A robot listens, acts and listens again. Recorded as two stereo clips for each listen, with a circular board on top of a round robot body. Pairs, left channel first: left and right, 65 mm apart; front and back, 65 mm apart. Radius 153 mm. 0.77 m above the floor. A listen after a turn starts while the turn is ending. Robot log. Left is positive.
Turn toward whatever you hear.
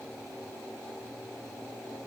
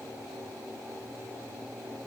cmd idle
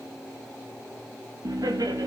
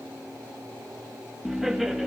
note: The laughter: 95° right.
cmd yaw -95
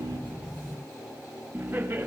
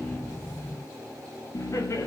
note: The laughter is now 35° right.
cmd yaw -35
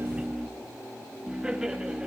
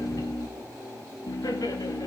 note: The laughter is now 15° right.
cmd yaw -15
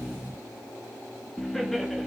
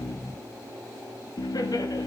end: Facing the laughter, 1 to 2 m away.